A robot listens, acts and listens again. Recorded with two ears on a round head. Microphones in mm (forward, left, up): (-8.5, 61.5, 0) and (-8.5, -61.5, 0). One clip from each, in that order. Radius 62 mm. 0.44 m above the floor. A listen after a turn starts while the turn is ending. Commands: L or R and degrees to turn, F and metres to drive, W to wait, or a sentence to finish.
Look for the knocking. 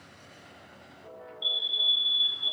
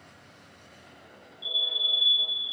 W
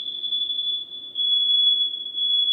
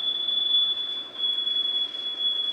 W
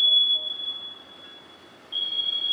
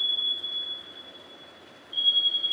I can't make out knocking, only a fire alarm.